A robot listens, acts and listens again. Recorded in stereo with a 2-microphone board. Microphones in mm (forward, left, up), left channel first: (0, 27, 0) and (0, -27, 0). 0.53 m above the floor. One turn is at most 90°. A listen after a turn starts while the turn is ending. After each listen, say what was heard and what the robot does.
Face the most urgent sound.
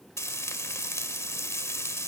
Keep listening.
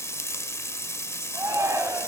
The shout: about 70° right or 110° right. Turn 70° right.
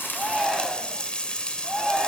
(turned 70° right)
Facing the shout, 2 to 4 m away.